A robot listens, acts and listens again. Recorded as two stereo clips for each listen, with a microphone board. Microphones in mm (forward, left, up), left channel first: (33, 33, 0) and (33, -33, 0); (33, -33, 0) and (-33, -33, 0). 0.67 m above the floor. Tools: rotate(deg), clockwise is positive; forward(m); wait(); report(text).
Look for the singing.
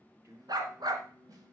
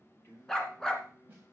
rotate(50)
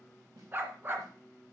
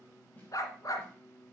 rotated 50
report("Facing the singing.")